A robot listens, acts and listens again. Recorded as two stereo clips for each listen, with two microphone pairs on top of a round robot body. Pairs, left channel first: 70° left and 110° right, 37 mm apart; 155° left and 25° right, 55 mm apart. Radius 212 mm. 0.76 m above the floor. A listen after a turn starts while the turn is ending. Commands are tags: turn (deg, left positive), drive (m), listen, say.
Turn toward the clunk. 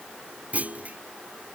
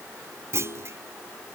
<turn deg="-60"/>
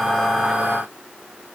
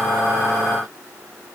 <say>Facing where the clunk came from. I can't hear it now.</say>